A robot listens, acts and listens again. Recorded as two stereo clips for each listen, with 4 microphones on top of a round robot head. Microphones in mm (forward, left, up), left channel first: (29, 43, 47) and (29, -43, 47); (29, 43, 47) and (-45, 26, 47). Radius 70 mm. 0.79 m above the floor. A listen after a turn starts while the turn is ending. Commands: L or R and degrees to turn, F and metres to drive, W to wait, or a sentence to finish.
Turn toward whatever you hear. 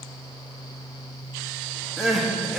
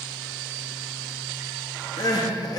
Facing the crying, 1 to 2 m away.